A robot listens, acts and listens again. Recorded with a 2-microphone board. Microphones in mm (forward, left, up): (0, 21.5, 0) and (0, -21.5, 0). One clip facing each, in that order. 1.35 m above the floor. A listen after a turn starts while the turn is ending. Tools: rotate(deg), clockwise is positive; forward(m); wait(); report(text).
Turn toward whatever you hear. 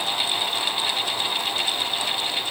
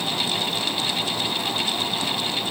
wait()
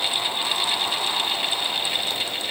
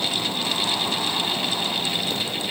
wait()
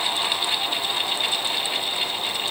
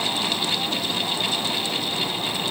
report("I can't make out anything.")